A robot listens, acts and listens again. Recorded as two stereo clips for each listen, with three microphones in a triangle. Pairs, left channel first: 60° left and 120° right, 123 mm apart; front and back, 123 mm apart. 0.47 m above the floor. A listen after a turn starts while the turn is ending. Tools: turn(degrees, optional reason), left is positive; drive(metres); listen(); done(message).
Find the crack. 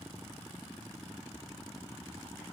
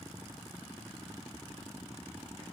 listen()
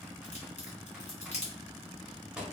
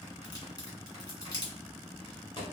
turn(degrees=55, reason="The crack: 55° left.")
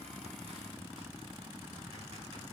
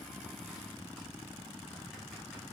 done("I heard a crack from this way, but can't make it out now.")